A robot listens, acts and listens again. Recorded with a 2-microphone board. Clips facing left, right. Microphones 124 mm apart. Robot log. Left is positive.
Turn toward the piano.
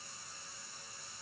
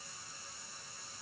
cmd idle
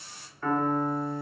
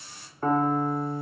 note: The piano: about 35° right or 145° right.
cmd yaw -35
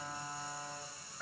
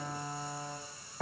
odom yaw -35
note: So it is at 110° right.
cmd yaw -110
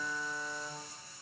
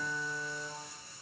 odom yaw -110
end: Facing the piano.